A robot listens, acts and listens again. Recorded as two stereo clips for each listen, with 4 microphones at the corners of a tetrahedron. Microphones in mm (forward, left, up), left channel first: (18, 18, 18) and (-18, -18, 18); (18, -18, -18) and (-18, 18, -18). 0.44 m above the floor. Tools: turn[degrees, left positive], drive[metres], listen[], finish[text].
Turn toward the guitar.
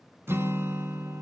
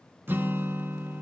Thought: The guitar: 175° right.
Action: turn[-175]
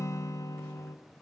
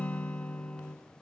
Thought: The guitar is now 25° left.
Action: turn[25]
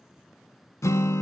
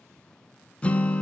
Thought: The guitar is now 25° left.
Action: turn[25]
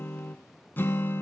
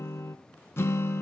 Action: finish[Found it: a guitar, straight ahead.]